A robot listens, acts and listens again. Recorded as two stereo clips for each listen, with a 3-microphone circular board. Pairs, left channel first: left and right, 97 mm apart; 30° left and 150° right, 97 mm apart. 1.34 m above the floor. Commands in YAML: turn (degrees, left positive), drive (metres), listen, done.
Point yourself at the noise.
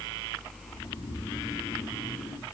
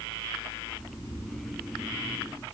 turn: 135
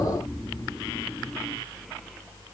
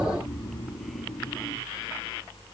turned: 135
turn: 10
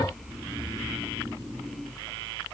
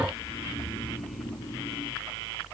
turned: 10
done: "Found it: snoring, straight ahead, 2 to 4 m away."